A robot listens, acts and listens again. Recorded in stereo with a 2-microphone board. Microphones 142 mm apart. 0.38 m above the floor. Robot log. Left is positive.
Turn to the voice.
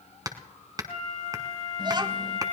note: The child speaking: about 30° right or 150° right.
cmd yaw -30
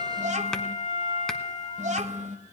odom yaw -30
note: So it is at 115° right.
cmd yaw -115
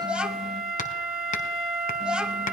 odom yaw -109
end: Facing the child speaking, 1 to 2 m away.